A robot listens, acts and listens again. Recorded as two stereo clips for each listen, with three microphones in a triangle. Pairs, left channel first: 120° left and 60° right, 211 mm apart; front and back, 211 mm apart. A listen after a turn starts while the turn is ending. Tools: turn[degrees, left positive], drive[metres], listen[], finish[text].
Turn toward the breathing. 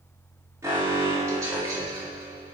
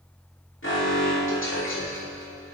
Action: listen[]
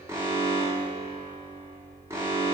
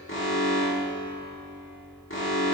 Action: listen[]
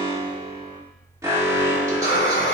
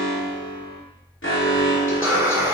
Thought: The breathing: 110° left.
Action: turn[110]
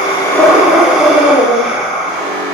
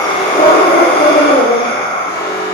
Thought: The breathing is now 25° left.
Action: turn[25]
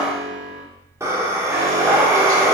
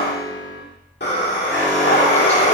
Thought: The breathing is now 15° left.
Action: turn[15]
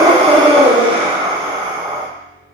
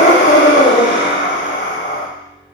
Action: finish[Facing the breathing.]